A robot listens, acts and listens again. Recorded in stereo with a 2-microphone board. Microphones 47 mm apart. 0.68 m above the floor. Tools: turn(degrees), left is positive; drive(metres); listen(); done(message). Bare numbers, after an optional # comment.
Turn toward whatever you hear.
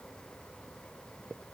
listen()
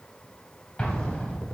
# The explosion: about 20° left or 160° left.
turn(20)
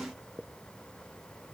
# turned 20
listen()
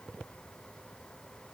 done("I heard an explosion, but can't make it out now. It was about straight ahead or 140° left.")